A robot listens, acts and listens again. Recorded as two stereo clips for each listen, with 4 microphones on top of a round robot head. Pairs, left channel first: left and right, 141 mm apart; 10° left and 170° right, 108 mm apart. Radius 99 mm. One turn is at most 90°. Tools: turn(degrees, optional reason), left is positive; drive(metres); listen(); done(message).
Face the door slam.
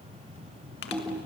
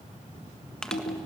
listen()
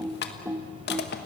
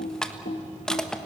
listen()
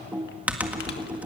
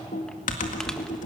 done("I can't make out a door slam to turn to.")